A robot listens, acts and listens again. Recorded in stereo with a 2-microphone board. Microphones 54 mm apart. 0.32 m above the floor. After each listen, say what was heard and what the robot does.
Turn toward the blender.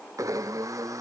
Turn 90° right.
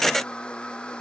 So it is at 15° left. Turn 15° left.
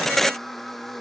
Found it: a blender, straight ahead.